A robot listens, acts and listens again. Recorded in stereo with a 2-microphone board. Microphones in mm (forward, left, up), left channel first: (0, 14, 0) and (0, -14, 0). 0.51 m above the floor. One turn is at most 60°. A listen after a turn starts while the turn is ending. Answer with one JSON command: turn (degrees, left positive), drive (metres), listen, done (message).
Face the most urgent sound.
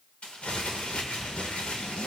{"listen": true}
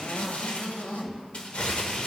{"listen": true}
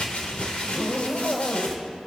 {"done": "I can't make out anything urgent, only crumpling and a zipper."}